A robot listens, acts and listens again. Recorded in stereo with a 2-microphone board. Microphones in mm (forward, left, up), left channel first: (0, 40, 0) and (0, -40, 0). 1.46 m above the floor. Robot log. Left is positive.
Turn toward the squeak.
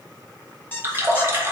note: The squeak: about 25° left or 155° left.
cmd yaw +25
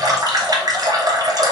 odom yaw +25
cmd idle
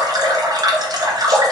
cmd idle
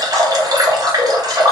end: I heard a squeak, but can't make it out now. It was about straight ahead or 130° left.